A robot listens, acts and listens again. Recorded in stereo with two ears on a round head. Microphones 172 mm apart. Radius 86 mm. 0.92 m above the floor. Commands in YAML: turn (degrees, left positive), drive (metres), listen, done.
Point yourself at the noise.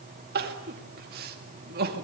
turn: -50
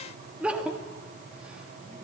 done: "Facing the crying, 1 to 2 m away."